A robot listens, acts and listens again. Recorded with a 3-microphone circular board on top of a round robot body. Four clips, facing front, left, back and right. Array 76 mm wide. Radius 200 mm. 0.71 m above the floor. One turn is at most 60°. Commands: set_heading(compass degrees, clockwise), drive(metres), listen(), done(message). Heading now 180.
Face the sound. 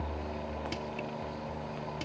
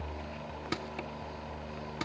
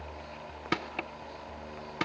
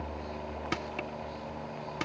set_heading(240)
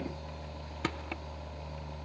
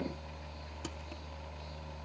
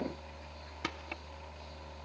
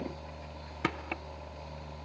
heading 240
set_heading(300)
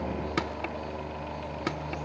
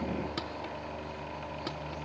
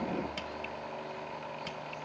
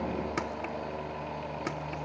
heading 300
set_heading(320)
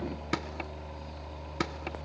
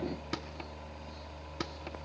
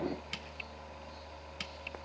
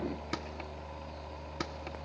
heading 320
listen()
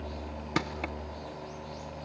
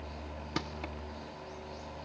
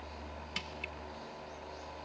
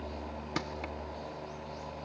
listen()
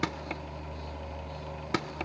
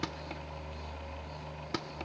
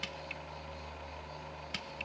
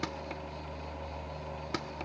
done("Facing the crushing.")